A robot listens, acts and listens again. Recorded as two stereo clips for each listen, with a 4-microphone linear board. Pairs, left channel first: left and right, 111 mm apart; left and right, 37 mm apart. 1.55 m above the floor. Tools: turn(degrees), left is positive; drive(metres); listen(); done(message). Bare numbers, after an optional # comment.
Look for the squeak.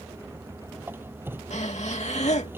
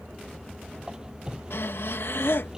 # The squeak: about 20° right or 160° right.
turn(-20)
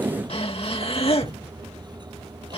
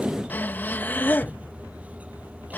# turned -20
listen()
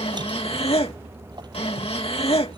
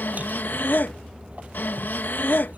listen()
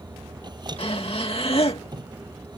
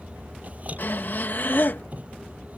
# So it is at 140° right.
turn(-140)
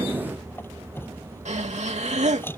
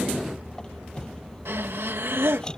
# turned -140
# The squeak is now 20° left.
turn(20)
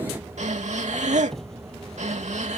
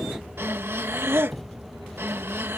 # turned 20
done("Facing the squeak.")